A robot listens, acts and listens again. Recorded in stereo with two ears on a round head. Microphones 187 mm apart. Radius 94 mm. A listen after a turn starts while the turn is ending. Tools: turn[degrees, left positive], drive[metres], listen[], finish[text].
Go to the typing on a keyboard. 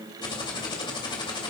Thought: The typing on a keyboard: about 25° left or 155° left.
Action: turn[25]
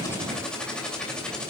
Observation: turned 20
Action: drive[1.0]
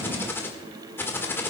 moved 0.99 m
Thought: The typing on a keyboard is now 10° left.
Action: turn[10]
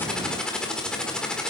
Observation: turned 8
Action: drive[1.0]
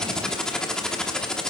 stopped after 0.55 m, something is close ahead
Action: finish[Arrived at the typing on a keyboard, straight ahead.]